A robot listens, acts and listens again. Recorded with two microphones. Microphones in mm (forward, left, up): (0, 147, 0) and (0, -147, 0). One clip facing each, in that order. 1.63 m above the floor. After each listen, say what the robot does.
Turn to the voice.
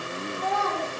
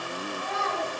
Turn 75° left.
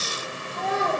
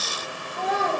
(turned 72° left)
Turn 10° right.
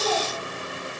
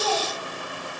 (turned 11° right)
Found it: a child speaking, straight ahead.